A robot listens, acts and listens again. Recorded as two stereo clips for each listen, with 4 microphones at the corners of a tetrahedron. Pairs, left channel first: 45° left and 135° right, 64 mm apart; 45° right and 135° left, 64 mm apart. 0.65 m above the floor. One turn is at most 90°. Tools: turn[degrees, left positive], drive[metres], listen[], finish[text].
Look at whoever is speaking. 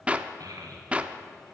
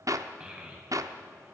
Thought: The child speaking: 150° right.
Action: turn[-90]
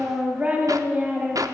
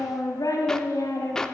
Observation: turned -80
Thought: The child speaking is now 70° right.
Action: turn[-70]
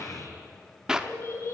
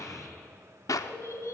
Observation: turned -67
Action: finish[Facing the child speaking, 2 to 4 m away.]